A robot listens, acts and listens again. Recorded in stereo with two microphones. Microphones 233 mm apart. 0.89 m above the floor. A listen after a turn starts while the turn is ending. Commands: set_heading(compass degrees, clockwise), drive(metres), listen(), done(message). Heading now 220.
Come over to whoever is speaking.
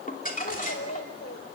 set_heading(130)
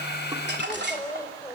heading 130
set_heading(115)
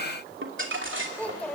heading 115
drive(1.0)
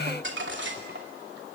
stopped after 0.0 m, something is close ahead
listen()
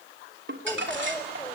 set_heading(105)
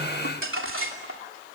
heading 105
listen()
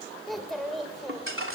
done("Blocked. The child speaking is further on, straight ahead.")